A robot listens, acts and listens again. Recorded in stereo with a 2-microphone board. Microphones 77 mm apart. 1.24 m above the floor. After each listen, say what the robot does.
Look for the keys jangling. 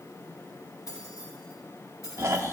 Turn 45° left.
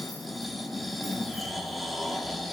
Keep listening.
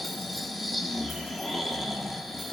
Keep listening.
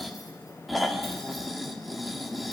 I heard keys jangling, but can't make it out now. It was about straight ahead or 90° left.